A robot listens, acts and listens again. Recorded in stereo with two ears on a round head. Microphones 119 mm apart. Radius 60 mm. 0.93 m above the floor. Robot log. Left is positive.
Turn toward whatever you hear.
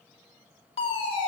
note: The fire alarm: about 40° left or 140° left.
cmd yaw +40
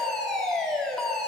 end: Found it: a fire alarm, straight ahead, 2 to 4 m away.